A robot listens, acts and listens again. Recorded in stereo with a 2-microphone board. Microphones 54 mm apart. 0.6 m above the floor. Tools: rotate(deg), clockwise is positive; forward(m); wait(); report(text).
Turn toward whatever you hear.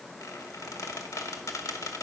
rotate(-90)
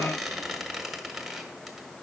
report("Facing the squeak, 1 to 2 m away.")